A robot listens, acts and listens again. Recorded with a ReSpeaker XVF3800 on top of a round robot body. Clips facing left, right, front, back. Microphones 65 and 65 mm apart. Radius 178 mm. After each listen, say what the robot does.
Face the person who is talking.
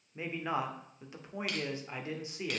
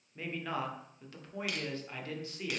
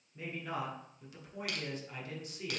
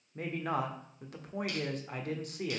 Turn 155° left.
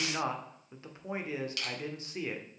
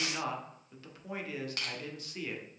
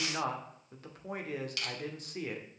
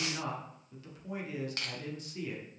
Turn 25° left.
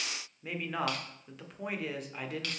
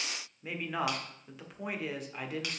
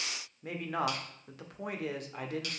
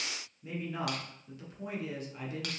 Facing the man speaking, 1 to 2 m away.